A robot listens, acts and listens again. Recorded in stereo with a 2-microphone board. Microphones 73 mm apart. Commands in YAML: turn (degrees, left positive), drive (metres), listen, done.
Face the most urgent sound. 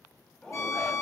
turn: 30
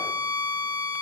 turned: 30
listen: true
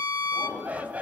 turn: -20
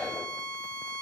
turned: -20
done: "Facing the shout, over 4 m away."